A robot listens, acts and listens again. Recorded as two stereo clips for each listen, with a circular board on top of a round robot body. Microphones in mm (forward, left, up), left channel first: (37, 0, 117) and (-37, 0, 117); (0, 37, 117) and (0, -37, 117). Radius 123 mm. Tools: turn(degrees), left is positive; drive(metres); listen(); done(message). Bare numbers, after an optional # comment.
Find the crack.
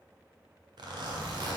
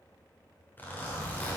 listen()
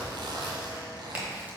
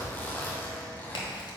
# The crack: 110° left.
turn(110)
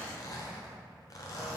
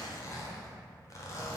done("Facing where the crack came from. I can't hear it now.")